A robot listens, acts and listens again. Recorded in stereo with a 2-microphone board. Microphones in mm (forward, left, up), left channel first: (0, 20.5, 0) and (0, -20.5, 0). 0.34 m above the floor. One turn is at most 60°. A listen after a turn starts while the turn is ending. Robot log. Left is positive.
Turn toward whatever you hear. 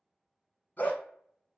note: The dog barking: about 45° left or 135° left.
cmd yaw +45
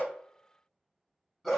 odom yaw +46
end: Facing the dog barking.